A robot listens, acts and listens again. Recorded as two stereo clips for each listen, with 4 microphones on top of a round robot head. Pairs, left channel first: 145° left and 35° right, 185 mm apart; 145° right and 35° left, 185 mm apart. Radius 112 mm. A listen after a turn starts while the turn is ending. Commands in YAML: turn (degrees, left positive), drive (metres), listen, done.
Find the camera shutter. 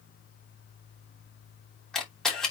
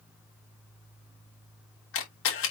turn: -130
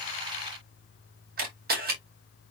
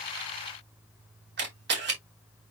done: "Facing the camera shutter, 2 to 4 m away."